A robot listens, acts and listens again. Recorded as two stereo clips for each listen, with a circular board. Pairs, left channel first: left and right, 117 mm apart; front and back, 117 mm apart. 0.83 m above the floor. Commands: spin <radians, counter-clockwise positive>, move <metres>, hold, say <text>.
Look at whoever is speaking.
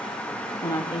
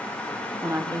spin 2.27
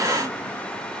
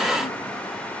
hold
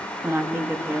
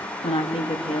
spin -0.44
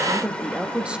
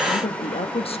spin -0.17
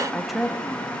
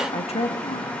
say Found it: a woman speaking, straight ahead.